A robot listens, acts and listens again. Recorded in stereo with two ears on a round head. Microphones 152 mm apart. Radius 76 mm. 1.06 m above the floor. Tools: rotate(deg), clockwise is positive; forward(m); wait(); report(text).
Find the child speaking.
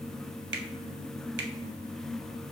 wait()
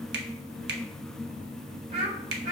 rotate(45)
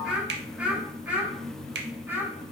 rotate(10)
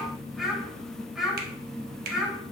report("Found it: a child speaking, straight ahead.")